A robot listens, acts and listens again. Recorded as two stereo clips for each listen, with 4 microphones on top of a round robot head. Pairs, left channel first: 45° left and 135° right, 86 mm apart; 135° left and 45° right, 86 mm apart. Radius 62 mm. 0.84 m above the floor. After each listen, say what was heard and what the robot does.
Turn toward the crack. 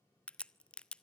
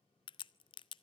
The crack: 125° left. Turn 125° left.
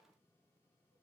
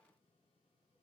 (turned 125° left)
Facing where the crack came from. I can't hear it now.